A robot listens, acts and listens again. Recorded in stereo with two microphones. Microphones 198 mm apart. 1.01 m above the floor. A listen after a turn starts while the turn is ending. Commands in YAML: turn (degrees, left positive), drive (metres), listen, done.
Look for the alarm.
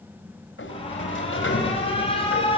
turn: 30
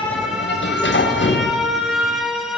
done: "Facing the alarm."